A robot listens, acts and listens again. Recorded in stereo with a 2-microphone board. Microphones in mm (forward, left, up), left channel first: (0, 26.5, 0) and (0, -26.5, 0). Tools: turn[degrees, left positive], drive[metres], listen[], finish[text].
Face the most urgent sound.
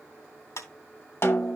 Action: listen[]
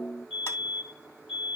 Action: turn[-30]
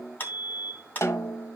Thought: So it is at 140° right.
Action: turn[-140]
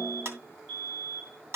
Thought: The fire alarm is now 30° right.
Action: turn[-30]
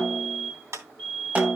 Thought: The fire alarm is now 10° right.
Action: turn[-10]
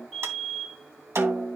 Action: finish[Facing the fire alarm, over 4 m away.]